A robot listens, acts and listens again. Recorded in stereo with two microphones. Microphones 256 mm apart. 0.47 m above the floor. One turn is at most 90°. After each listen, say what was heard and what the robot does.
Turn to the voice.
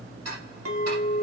Keep listening.
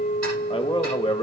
The man speaking: about 20° left or 160° left. Turn 20° left.
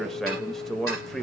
Found it: a man speaking, straight ahead, 1 to 2 m away.